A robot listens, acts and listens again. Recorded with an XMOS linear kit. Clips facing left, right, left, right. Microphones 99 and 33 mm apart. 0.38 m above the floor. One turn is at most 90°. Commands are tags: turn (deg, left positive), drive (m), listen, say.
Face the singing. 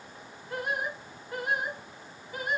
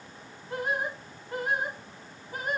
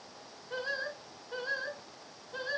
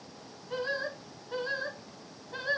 <turn deg="-45"/>
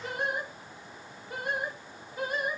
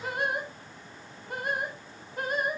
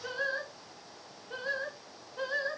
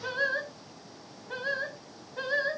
<turn deg="-50"/>
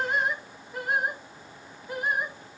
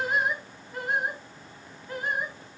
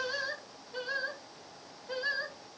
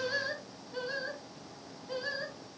<turn deg="15"/>
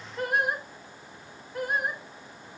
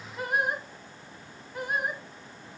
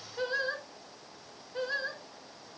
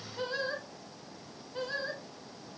<say>Found it: singing, straight ahead, 1 to 2 m away.</say>